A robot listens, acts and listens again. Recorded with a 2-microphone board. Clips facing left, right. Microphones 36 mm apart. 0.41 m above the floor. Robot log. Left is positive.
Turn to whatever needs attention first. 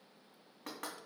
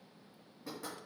cmd idle
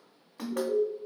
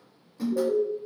note: The alarm: about 20° right or 160° right.
cmd yaw -20
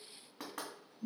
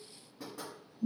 note: So it is at 140° right.
cmd yaw -140
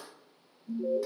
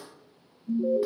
note: The alarm is now 20° right.
cmd yaw -20
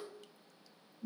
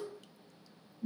end: Facing the alarm, 1 to 2 m away.